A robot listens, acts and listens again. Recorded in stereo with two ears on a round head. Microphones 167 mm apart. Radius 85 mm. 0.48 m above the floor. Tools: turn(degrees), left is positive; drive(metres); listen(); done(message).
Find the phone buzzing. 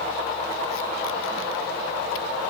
listen()
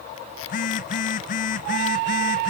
turn(degrees=45)
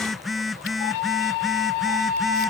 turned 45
done("Facing the phone buzzing.")